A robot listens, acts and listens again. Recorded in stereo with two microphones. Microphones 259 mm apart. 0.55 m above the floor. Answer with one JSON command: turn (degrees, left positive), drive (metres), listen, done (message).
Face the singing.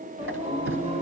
{"turn": -25}
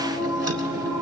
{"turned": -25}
{"turn": -30}
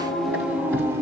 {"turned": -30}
{"turn": -30}
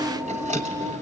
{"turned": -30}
{"turn": -20}
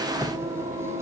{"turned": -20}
{"turn": -25}
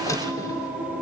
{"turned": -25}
{"done": "Found it: singing, straight ahead, 1 to 2 m away."}